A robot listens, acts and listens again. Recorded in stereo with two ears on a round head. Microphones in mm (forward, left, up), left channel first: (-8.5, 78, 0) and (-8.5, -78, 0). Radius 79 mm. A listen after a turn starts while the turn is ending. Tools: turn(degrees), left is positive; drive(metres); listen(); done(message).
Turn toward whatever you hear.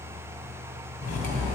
turn(degrees=50)
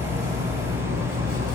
turn(degrees=80)
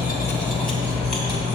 done("Facing the cutlery clinking.")